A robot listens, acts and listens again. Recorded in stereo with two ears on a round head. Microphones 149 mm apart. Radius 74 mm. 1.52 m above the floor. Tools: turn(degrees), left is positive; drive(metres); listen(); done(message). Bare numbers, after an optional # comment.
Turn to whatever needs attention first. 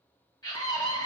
# The scream: about 25° left or 155° left.
turn(25)
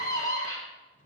# So it is at 135° left.
turn(135)
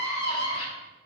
# The scream is now 40° left.
turn(40)
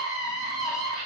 done("Facing the scream, 2 to 4 m away.")